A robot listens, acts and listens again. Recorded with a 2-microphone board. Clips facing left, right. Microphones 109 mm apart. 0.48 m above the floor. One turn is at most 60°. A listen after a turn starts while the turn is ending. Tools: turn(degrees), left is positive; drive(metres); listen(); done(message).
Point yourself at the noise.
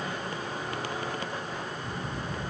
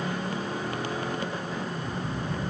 turn(degrees=55)
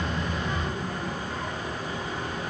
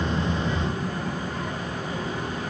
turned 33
turn(degrees=60)
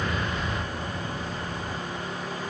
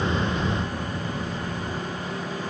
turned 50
turn(degrees=40)
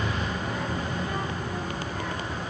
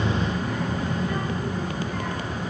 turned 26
turn(degrees=20)
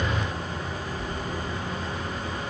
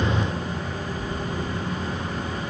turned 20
done("Found it: a child speaking, straight ahead.")